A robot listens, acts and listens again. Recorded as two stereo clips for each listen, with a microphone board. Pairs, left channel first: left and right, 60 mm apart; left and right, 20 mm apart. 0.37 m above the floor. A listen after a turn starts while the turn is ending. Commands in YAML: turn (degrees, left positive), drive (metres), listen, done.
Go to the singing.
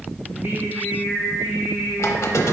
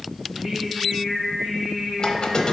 turn: -30
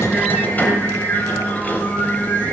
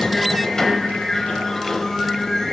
drive: 1.0
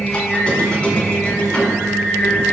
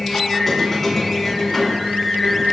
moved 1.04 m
drive: 1.0
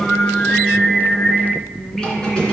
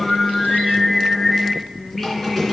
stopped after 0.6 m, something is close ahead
turn: 15
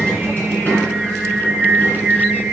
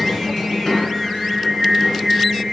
turn: -10
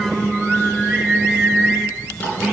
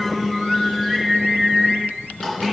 done: "Arrived at the singing, straight ahead."